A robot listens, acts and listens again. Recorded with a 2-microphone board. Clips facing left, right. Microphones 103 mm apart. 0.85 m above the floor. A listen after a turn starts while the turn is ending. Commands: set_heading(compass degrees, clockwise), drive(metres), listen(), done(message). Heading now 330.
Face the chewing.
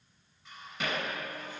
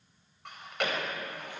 set_heading(35)
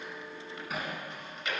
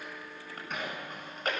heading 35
set_heading(80)
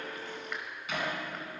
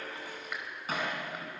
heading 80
listen()
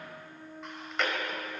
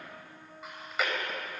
done("Found it: chewing, straight ahead.")